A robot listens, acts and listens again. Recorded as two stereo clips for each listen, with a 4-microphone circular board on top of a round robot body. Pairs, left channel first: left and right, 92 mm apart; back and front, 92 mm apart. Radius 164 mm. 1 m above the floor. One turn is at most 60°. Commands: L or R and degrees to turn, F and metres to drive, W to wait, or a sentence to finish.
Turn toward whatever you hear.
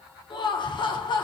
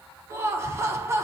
L60
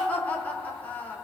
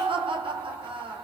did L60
L20
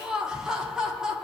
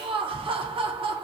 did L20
Facing the laughter, under 1 m away.